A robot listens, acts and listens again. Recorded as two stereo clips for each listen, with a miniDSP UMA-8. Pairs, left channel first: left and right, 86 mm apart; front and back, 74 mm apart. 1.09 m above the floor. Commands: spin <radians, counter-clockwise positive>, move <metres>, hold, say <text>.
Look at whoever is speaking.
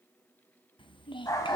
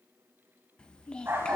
spin 1.31
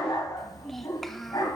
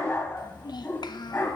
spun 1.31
say Facing the child speaking.